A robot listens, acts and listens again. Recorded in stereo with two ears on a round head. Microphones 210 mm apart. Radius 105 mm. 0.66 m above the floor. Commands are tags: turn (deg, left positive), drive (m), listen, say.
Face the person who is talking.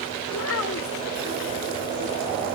<turn deg="65"/>
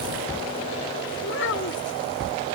<turn deg="55"/>
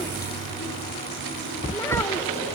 <listen/>
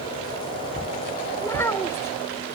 <turn deg="10"/>
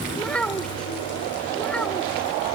<say>Found it: a child speaking, straight ahead.</say>